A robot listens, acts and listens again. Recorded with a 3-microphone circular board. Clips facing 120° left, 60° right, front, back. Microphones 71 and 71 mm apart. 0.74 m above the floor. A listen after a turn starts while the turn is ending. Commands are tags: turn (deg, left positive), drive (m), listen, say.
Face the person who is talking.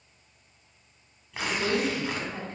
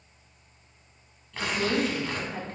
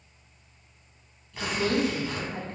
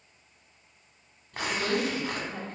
<turn deg="-30"/>
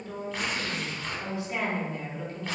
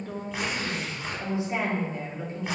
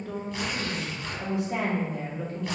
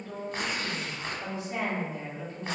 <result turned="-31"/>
<say>Facing the woman speaking.</say>